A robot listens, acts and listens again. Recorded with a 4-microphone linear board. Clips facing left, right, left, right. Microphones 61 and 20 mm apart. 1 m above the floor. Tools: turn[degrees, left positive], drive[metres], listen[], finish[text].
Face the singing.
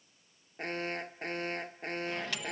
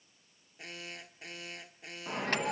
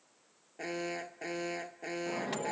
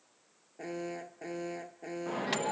Action: listen[]
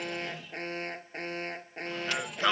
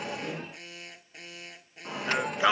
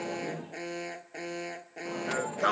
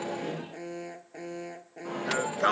Action: turn[-30]
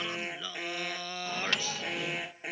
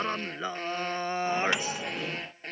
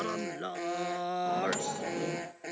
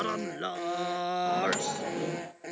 Thought: So it is at 150° right.
Action: turn[-150]
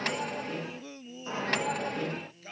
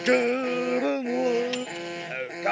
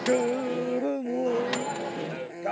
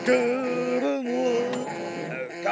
Thought: The singing is now 65° right.
Action: turn[-65]
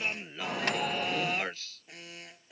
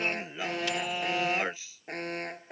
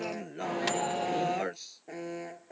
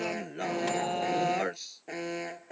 Thought: The singing is now 15° right.
Action: turn[-15]
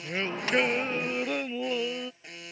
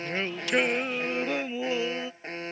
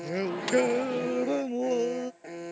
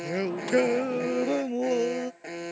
Action: finish[Facing the singing.]